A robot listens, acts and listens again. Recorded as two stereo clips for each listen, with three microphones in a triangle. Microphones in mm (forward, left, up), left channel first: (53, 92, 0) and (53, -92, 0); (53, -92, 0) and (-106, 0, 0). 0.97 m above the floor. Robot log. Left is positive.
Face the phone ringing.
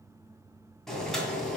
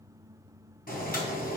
cmd idle
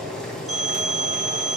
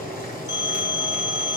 note: The phone ringing: 40° right.
cmd yaw -40
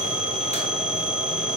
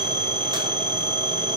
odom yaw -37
end: Found it: a phone ringing, straight ahead.